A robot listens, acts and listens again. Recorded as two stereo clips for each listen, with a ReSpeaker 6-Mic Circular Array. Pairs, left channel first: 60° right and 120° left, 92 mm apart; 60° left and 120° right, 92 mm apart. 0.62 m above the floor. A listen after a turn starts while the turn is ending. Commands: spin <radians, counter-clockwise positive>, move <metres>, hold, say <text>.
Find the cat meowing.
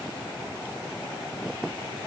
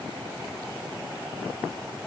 hold
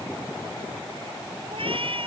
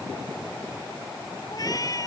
spin 1.92
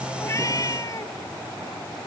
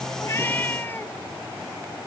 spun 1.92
spin -0.17
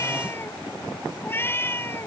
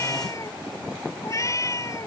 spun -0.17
say Facing the cat meowing.